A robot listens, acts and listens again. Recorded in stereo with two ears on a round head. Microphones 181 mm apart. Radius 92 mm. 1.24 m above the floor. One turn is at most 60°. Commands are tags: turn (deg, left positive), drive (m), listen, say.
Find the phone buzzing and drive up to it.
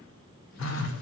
<turn deg="60"/>
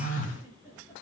<turn deg="40"/>
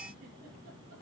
<listen/>
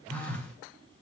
<drive m="1.0"/>
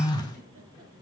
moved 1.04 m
<turn deg="20"/>
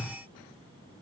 <drive m="1.0"/>
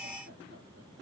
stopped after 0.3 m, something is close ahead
<listen/>
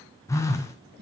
<turn deg="15"/>
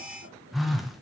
<say>Arrived at the phone buzzing, straight ahead.</say>